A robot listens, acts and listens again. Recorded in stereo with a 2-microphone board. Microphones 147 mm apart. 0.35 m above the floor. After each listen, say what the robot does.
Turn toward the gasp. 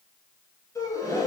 Turn 20° left.
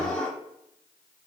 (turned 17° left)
Found it: a gasp, straight ahead, 1 to 2 m away.